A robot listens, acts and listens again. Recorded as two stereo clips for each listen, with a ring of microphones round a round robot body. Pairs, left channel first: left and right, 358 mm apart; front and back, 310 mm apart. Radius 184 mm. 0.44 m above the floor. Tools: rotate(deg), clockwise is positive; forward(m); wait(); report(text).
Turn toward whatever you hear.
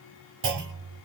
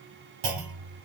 rotate(150)
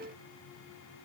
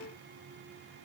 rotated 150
report("Facing where the clunk came from. I can't hear it now.")